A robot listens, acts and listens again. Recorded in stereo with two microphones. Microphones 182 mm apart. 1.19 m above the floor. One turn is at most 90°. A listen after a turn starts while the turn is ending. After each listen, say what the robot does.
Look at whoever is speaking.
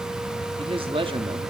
Turn 30° right.
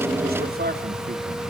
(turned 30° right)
Turn 90° right.
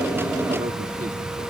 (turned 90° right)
Turn 35° right.
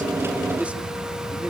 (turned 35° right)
Keep listening.
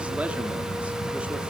I heard a man speaking from this way, but can't make it out now.